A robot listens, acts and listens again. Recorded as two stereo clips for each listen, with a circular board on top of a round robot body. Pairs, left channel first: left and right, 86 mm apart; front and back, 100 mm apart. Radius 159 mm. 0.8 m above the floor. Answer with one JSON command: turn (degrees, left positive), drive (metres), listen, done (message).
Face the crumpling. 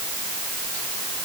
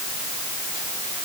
{"listen": true}
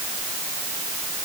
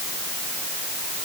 {"listen": true}
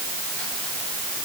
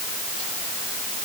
{"done": "I can't make out crumpling."}